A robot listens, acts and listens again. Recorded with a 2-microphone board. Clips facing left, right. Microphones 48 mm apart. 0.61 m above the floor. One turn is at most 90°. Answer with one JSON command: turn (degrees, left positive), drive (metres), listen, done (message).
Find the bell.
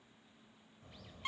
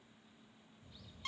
{"listen": true}
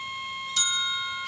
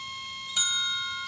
{"turn": -15}
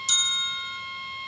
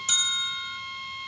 {"turn": -90}
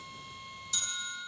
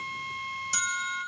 {"turn": -60}
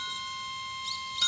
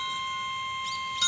{"done": "Found it: a bell, straight ahead."}